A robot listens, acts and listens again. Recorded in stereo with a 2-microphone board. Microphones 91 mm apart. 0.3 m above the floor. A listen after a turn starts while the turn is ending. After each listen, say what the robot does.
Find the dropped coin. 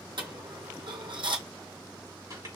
Turn 65° right.
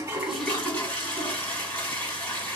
Keep listening.
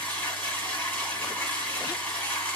I heard a dropped coin, but can't make it out now. It was about straight ahead or 50° right.